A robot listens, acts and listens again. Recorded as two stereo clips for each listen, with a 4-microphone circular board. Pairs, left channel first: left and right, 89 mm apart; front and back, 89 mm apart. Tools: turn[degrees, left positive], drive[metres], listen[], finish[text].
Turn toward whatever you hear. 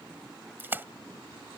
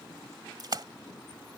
Thought: The splash: 155° right.
Action: turn[-155]
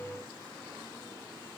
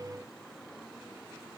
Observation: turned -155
Action: finish[I heard a splash from this way, but can't make it out now.]